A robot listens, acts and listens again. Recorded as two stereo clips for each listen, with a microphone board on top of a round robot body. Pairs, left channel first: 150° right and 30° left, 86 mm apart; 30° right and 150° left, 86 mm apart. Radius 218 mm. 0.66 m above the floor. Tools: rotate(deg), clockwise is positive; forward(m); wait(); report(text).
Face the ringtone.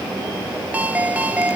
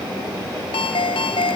rotate(45)
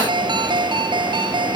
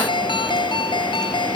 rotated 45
report("Found it: a ringtone, straight ahead.")